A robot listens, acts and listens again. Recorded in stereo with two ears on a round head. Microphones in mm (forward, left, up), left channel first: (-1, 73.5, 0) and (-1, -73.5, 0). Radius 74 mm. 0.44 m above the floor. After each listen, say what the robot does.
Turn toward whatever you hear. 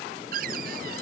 Turn 60° right.
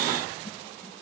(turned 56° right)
Keep listening.
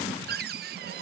Turn 65° right.
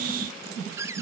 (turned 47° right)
Turn 15° right.
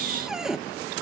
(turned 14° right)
Facing the cupboard door.